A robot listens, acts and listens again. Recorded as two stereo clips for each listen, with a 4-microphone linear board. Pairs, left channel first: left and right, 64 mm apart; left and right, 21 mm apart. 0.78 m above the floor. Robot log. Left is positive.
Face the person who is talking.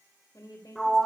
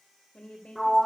note: The woman speaking: about 70° left or 110° left.
cmd yaw +70
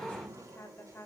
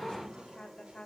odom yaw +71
note: So it is at 35° left.
cmd yaw +35
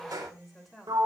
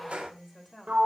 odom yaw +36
end: Found it: a woman speaking, straight ahead, 2 to 4 m away.